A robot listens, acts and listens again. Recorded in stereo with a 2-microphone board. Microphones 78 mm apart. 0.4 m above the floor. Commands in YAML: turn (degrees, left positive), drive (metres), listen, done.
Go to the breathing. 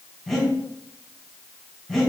turn: 30
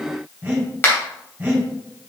turn: -25
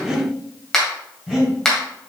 drive: 1.0
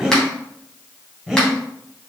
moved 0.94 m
turn: -10
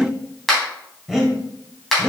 drive: 1.0
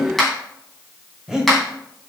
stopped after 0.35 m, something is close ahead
done: "Arrived at the breathing, straight ahead."